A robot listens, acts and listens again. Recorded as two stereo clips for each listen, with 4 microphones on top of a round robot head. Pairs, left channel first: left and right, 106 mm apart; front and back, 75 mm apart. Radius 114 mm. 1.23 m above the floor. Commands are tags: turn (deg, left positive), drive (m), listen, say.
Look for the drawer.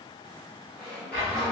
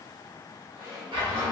<turn deg="170"/>
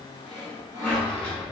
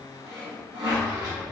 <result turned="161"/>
<turn deg="10"/>
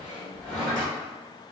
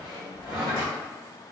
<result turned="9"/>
<say>Found it: a drawer, straight ahead.</say>